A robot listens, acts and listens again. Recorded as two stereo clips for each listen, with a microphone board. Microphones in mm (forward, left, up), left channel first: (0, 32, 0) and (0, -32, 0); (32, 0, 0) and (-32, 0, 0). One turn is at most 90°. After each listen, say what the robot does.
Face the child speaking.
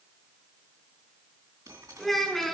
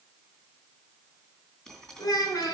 Facing the child speaking, 2 to 4 m away.